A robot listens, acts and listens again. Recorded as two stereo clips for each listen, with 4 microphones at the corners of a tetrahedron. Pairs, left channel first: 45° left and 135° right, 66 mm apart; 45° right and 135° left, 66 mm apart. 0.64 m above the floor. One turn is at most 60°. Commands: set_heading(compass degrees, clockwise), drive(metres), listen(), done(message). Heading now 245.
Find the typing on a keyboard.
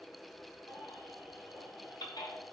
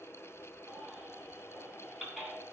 listen()
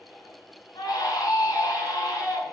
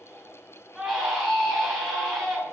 listen()
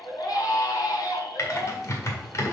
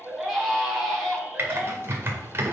set_heading(185)
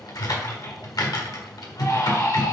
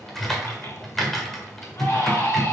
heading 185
set_heading(145)
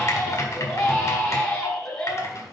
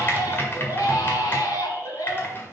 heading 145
done("Facing the typing on a keyboard, 1 to 2 m away.")